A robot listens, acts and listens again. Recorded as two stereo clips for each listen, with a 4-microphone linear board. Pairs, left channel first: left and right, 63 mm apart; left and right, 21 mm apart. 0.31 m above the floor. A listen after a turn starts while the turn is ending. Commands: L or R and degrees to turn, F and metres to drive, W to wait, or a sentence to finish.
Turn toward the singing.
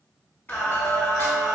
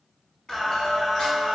L45
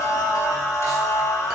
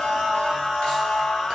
L60
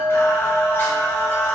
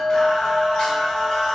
L25
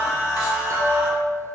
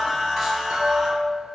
R10
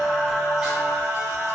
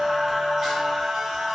R15
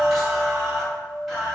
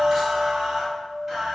Found it: singing, straight ahead.